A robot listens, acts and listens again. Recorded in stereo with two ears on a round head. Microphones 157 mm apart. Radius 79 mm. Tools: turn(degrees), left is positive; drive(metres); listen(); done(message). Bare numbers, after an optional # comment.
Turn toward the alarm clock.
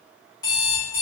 # The alarm clock: about 25° left or 155° left.
turn(25)
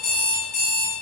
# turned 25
# So it is at 130° left.
turn(130)
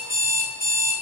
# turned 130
done("Found it: an alarm clock, straight ahead, 1 to 2 m away.")